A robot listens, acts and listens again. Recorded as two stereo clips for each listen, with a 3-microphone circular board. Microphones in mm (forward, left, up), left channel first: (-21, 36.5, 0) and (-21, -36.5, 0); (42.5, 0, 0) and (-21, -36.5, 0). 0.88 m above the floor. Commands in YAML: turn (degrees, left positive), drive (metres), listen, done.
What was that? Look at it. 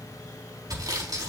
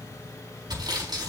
turn: -125
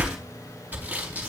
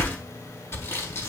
turn: -25
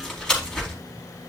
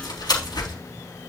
turn: 10
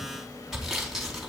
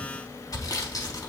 done: "Found it: sawing, straight ahead, over 4 m away."